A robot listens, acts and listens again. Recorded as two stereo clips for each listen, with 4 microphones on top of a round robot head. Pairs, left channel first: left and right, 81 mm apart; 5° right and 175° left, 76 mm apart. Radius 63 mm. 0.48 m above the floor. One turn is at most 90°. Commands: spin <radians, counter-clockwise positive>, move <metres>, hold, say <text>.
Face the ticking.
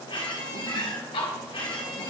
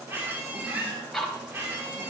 spin 1.40
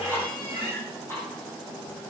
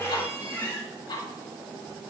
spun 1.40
spin 0.35
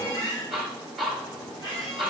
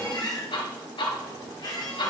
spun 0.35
say Facing the ticking, 1 to 2 m away.